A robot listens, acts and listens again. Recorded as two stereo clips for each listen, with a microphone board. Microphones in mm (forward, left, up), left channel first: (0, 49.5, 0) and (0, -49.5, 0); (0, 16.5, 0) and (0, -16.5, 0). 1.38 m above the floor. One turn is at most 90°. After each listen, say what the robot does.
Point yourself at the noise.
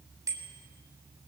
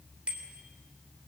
Turn 35° right.
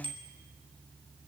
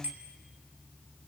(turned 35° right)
Turn 90° right.
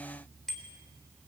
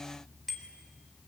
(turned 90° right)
Facing the bicycle bell, 2 to 4 m away.